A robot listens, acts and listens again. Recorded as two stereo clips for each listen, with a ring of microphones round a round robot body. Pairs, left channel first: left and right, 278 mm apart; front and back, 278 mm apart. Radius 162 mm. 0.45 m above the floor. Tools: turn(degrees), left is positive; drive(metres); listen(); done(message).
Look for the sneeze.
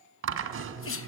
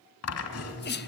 turn(degrees=50)
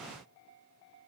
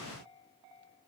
done("I heard a sneeze from this way, but can't make it out now.")